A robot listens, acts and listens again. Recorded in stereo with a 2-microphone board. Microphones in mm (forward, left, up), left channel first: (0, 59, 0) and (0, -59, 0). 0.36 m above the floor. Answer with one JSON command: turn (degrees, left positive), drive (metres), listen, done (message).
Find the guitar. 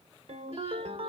{"listen": true}
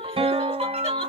{"turn": -50}
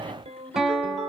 {"done": "Facing the guitar."}